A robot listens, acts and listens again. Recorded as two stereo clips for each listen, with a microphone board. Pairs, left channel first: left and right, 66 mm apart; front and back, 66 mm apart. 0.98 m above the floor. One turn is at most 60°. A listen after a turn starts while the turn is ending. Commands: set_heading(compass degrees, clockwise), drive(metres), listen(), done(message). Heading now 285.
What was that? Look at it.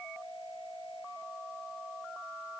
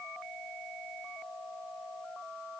listen()
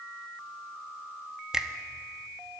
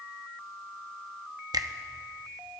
set_heading(345)
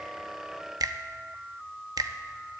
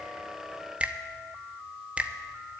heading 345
set_heading(45)
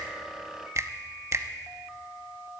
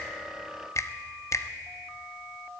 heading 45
set_heading(90)
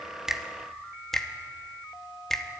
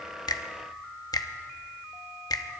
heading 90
done("Found it: a finger snap, straight ahead.")